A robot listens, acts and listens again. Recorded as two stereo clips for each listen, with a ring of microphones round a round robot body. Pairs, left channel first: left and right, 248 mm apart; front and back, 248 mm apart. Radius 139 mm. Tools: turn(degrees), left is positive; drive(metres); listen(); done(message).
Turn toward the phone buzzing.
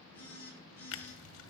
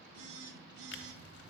turn(degrees=175)
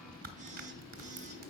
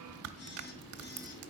listen()
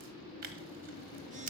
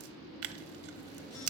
listen()
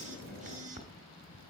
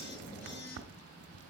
turn(degrees=-30)
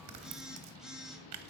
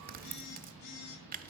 done("Facing the phone buzzing.")